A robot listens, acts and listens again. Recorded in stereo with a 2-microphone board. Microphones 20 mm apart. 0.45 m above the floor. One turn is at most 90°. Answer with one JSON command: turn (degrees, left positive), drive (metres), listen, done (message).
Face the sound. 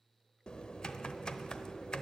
{"turn": 45}
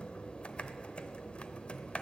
{"turn": 90}
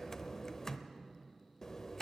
{"turn": 25}
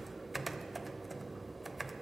{"done": "Facing the typing on a keyboard, under 1 m away."}